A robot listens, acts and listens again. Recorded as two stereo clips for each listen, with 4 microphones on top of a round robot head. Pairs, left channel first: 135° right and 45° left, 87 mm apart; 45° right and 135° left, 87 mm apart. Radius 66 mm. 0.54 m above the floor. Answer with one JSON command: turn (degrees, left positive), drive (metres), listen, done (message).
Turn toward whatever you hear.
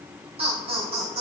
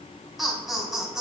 {"turn": 50}
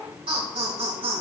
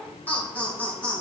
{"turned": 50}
{"turn": 30}
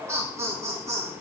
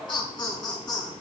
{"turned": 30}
{"turn": -10}
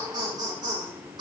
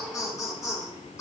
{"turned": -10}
{"turn": 10}
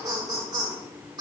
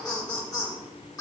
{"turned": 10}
{"done": "Facing the laughter."}